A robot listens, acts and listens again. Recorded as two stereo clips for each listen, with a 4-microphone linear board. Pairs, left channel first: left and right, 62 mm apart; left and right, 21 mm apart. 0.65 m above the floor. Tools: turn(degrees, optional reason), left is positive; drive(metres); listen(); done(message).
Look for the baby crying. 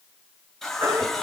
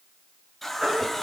turn(degrees=-90)
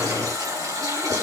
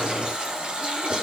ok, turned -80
turn(degrees=-10, reason="Nothing new. It was at 10° right.")
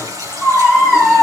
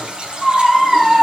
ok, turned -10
done("Found it: a baby crying, straight ahead.")